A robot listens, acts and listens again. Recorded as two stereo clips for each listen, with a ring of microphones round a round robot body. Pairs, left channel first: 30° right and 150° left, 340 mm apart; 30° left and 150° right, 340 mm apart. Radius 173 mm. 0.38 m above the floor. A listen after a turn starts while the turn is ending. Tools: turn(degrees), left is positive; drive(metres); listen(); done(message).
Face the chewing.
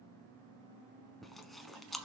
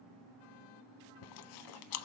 turn(degrees=60)
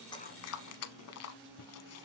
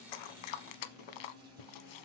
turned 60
turn(degrees=20)
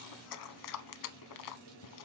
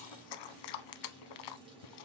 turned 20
turn(degrees=10)
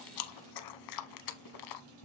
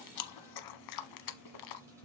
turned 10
done("Facing the chewing, under 1 m away.")